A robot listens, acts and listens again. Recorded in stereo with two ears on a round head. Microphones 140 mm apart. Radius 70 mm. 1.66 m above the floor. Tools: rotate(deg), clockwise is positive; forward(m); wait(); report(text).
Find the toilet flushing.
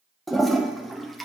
rotate(-30)
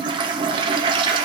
rotate(30)
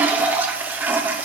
rotate(10)
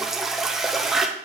report("Found it: a toilet flushing, straight ahead, under 1 m away.")